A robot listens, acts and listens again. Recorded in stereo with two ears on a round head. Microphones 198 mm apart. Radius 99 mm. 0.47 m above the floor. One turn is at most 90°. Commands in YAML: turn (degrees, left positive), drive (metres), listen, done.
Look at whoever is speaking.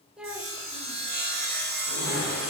turn: -30
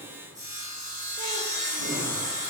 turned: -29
listen: true
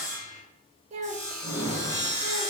turn: -90
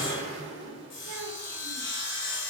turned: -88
turn: -60
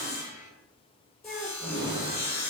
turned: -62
done: "Facing the child speaking."